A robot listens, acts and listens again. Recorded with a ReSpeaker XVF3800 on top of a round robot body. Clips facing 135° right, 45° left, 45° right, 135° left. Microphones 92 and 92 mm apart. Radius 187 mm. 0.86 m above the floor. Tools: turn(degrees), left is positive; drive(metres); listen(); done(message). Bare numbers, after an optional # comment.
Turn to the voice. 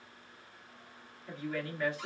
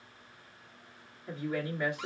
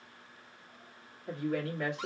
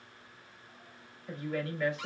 # The woman speaking: 25° right.
turn(-25)
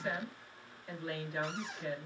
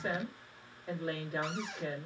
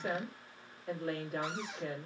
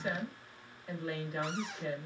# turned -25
done("Found it: a woman speaking, straight ahead.")